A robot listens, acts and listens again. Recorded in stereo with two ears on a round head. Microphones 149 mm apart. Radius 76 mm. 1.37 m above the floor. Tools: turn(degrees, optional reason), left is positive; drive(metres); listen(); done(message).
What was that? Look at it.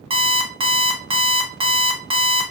turn(degrees=-35, reason="The alarm clock: about 35° right or 145° right.")
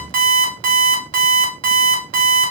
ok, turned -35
turn(degrees=-105, reason="So it is at 105° right.")
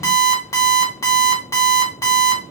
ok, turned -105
turn(degrees=20, reason="The alarm clock is now 20° left.")
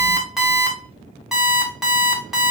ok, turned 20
done("Facing the alarm clock, under 1 m away.")